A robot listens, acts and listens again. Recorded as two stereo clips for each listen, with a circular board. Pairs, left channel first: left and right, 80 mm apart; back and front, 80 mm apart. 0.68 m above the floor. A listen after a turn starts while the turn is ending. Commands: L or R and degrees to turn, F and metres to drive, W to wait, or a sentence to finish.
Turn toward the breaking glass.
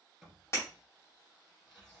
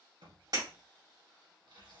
L30
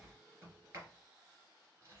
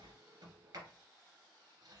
Facing where the breaking glass came from. I can't hear it now.